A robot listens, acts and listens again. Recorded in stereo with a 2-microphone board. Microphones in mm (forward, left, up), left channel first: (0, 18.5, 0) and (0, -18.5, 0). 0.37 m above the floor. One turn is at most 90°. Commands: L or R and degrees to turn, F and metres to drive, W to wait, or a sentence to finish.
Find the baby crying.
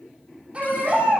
R30
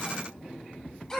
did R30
Facing the baby crying.